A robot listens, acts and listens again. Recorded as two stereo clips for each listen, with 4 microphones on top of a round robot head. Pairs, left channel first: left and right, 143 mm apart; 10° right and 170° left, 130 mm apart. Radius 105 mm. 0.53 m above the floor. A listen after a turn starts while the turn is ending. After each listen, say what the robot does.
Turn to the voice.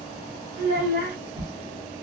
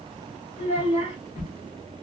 Turn 70° right.
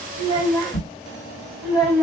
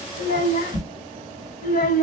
Facing the child speaking, 1 to 2 m away.